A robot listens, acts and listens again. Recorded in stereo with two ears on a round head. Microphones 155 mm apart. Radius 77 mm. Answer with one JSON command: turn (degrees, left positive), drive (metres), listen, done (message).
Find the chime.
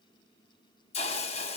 {"listen": true}
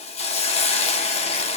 {"listen": true}
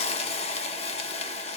{"done": "I can't make out a chime to turn to."}